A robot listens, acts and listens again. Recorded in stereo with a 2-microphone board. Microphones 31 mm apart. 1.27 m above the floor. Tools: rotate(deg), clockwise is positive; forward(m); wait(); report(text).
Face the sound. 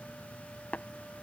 rotate(-65)
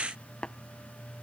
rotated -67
rotate(-35)
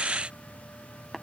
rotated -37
report("Found it: tapping, straight ahead.")